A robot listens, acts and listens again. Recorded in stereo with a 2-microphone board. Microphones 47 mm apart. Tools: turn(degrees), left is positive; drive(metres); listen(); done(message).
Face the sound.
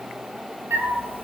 turn(degrees=-50)
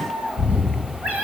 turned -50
turn(degrees=-60)
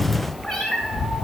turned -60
done("Facing the cat meowing, 2 to 4 m away.")